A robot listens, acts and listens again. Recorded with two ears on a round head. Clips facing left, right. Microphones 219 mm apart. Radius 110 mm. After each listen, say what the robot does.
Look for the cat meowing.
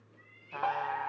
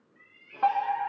Turn 30° right.
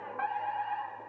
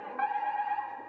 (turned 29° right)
Keep listening.
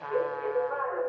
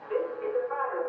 Keep listening.
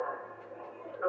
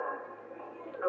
I heard a cat meowing, but can't make it out now. It was about 5° right or 120° right.